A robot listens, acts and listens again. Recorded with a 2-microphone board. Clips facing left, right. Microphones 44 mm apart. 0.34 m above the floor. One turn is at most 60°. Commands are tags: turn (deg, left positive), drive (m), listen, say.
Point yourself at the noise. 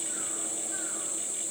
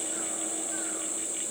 <listen/>
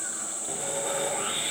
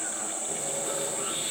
<turn deg="50"/>
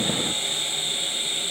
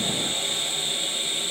<turn deg="10"/>
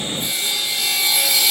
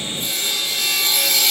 <say>Facing the sawing.</say>